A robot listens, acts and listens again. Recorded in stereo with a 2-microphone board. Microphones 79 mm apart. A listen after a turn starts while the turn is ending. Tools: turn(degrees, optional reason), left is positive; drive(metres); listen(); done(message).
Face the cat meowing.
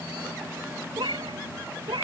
turn(degrees=-90)
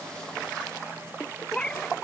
turn(degrees=10, reason="So it is at 10° left.")
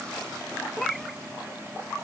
done("Found it: a cat meowing, straight ahead.")